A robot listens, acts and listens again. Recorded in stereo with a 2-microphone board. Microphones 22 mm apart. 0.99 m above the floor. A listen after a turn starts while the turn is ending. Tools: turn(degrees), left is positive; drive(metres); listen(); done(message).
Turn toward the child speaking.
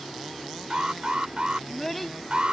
turn(degrees=30)
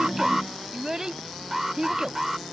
turn(degrees=-40)
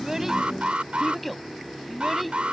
done("Facing the child speaking.")